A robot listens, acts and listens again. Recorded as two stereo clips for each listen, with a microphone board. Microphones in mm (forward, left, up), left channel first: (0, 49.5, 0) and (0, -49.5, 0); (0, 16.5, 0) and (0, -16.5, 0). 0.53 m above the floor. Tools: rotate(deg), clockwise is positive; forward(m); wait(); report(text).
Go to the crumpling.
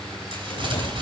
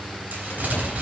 rotate(60)
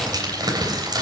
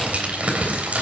rotate(50)
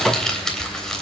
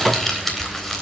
forward(1.0)
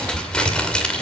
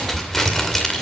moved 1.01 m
rotate(-10)
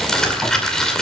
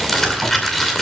forward(1.0)
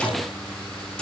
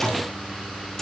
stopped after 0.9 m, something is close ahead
wait()
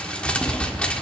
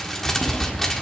rotate(-15)
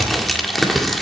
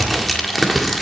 report("Arrived at the crumpling, straight ahead.")